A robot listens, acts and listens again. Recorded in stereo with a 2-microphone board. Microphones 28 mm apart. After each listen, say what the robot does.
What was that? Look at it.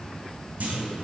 Turn 70° right.
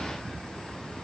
Keep listening.
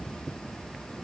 I heard a clunk, but can't make it out now. It was about straight ahead or 40° right.